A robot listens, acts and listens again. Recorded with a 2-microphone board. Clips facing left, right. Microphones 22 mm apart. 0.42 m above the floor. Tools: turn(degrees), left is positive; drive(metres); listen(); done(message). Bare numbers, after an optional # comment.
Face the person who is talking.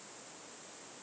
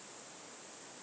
listen()
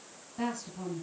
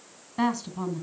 # The woman speaking: about 55° right or 125° right.
turn(-55)
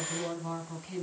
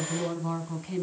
done("Found it: a woman speaking, straight ahead, 2 to 4 m away.")